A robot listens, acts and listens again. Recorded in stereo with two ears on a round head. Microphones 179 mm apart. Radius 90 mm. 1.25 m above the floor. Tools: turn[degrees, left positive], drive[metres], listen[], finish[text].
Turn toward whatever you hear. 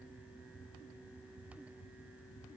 Action: listen[]
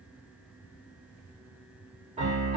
Thought: The piano: about 35° right or 145° right.
Action: turn[-35]
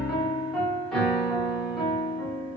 Action: finish[Facing the piano.]